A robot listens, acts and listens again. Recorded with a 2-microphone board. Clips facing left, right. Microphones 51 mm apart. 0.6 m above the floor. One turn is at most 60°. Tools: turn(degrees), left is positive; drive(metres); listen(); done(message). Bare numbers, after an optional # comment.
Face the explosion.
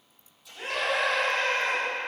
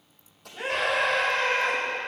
# The explosion: about 60° right or 120° right.
turn(-60)
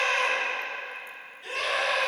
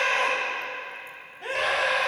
listen()
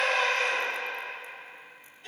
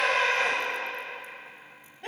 done("I heard an explosion, but can't make it out now. It was about straight ahead or 60° right.")